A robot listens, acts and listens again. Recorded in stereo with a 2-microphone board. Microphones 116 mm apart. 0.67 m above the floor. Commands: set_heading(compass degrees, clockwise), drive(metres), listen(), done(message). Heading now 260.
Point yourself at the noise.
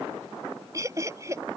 set_heading(285)
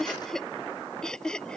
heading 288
done("Found it: laughter, straight ahead.")